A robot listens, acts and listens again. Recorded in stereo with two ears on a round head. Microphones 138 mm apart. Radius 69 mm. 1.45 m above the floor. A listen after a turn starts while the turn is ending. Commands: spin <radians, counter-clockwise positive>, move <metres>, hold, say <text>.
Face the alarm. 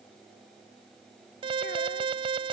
spin -0.61
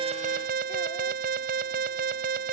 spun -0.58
spin -1.92
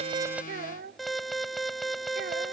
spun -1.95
say Found it: an alarm, straight ahead.